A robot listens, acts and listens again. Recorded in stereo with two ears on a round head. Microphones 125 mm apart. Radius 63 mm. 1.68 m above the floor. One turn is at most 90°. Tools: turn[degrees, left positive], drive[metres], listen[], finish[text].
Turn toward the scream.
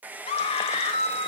Thought: The scream: about 40° left or 140° left.
Action: turn[40]
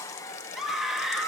Action: finish[Found it: a scream, straight ahead, 2 to 4 m away.]